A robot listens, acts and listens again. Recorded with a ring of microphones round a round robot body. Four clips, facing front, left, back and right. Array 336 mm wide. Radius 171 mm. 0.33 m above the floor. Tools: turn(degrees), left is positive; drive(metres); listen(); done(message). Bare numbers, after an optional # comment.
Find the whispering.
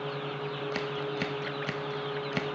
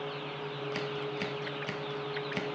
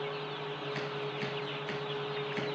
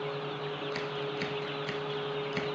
listen()
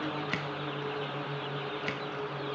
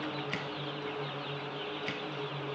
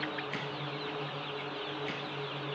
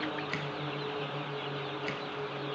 listen()
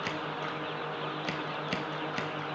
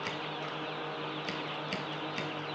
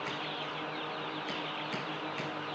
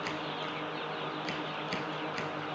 done("I can't make out whispering to turn to.")